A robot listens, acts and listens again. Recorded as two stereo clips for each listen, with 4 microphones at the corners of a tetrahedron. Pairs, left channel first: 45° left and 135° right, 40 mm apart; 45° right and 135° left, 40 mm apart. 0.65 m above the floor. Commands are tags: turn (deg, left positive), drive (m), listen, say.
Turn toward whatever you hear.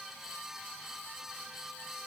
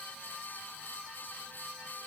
<listen/>
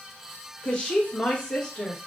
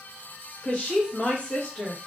<turn deg="-20"/>
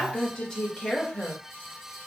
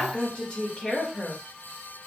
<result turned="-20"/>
<turn deg="-15"/>
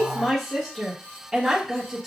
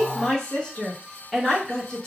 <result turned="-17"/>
<turn deg="-65"/>
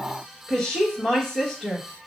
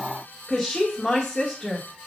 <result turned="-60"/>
<say>Found it: a woman speaking, straight ahead, 1 to 2 m away.</say>